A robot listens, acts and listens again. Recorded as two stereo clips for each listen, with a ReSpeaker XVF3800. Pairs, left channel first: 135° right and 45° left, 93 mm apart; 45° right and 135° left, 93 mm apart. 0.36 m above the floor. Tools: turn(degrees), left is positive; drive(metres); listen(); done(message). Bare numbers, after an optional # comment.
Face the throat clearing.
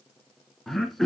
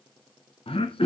# The throat clearing: 45° right.
turn(-45)
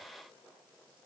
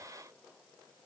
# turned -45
listen()
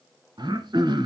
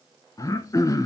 done("Found it: throat clearing, straight ahead.")